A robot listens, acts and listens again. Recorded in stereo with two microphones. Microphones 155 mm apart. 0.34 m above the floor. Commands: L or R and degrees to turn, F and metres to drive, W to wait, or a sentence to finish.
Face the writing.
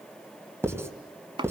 R15
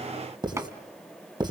R150
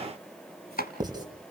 R35
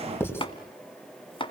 L15
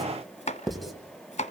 Found it: writing, straight ahead.